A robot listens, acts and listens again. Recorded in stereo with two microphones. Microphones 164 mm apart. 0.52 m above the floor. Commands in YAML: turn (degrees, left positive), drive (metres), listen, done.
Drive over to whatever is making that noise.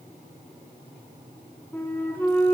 turn: 30
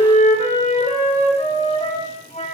turn: 135
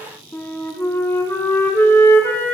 turn: 15
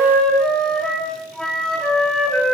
drive: 1.0
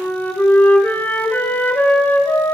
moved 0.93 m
turn: 10
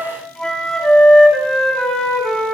drive: 1.0
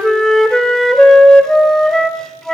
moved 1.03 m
drive: 1.0
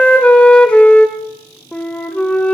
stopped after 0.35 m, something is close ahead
turn: 10
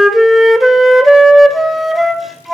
done: "Arrived at the flute, straight ahead."